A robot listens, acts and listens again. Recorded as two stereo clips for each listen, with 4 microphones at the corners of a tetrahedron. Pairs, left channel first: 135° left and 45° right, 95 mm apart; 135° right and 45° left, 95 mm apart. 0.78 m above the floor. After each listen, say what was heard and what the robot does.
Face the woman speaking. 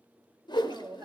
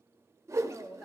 The woman speaking: 80° right. Turn 80° right.
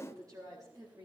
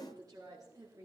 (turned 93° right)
Found it: a woman speaking, straight ahead.